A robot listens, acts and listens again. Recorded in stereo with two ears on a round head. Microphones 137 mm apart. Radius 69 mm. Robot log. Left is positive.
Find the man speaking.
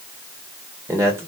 note: The man speaking: about 20° right or 160° right.
cmd yaw -20
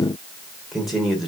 end: Found it: a man speaking, straight ahead, 1 to 2 m away.